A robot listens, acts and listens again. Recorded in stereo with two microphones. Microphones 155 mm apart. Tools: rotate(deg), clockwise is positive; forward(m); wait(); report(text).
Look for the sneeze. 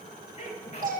rotate(-40)
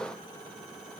wait()
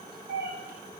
report("I heard a sneeze, but can't make it out now. It was about straight ahead or 100° left.")